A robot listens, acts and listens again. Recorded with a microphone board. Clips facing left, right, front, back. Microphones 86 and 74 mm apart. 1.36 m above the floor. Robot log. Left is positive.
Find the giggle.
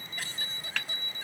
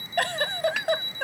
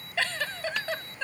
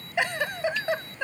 note: The giggle: 105° right.
cmd yaw -105
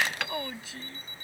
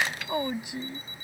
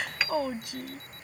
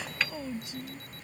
note: The giggle is now 15° right.
cmd yaw -15
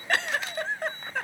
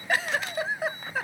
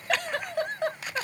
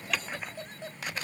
end: Facing the giggle.